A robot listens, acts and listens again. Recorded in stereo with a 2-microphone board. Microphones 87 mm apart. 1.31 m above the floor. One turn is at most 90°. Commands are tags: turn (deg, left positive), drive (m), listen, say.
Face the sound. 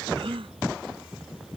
<turn deg="-90"/>
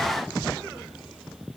<say>I heard a gasp from this way, but can't make it out now.</say>